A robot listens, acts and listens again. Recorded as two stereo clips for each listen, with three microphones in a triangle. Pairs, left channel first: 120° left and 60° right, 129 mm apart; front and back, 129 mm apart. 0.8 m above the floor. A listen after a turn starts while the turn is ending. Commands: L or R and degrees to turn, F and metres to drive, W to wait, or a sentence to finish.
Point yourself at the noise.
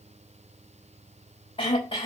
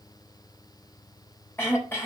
L70
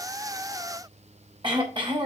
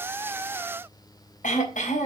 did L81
R10
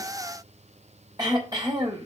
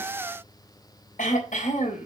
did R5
Found it: throat clearing, straight ahead.